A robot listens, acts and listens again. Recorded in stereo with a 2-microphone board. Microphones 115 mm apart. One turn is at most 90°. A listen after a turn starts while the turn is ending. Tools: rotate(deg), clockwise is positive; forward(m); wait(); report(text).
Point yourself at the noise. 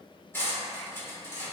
rotate(-20)
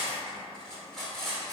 report("Facing the cutlery clinking, under 1 m away.")